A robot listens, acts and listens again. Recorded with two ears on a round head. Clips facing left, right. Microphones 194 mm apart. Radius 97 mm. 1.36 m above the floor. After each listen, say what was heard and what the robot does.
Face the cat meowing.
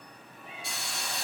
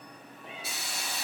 The cat meowing: about 50° right or 130° right. Turn 50° right.
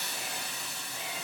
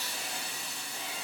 Keep listening.
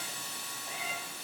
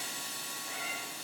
So it is at 25° left. Turn 25° left.
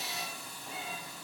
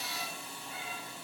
The cat meowing is now 20° left. Turn 20° left.
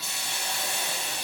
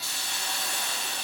Keep listening.
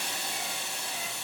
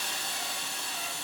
Keep listening.
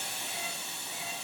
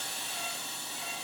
I heard a cat meowing from this way, but can't make it out now.